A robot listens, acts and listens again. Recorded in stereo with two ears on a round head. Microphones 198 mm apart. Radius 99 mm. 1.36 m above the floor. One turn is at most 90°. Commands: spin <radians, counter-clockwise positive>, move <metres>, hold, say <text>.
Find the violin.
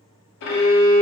spin 0.96
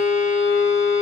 spin 1.13
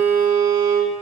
say Found it: a violin, straight ahead.